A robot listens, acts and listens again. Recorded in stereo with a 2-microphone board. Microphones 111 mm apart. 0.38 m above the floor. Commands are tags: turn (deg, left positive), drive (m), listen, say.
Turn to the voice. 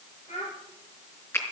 <turn deg="90"/>
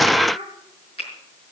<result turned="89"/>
<say>Facing the child speaking.</say>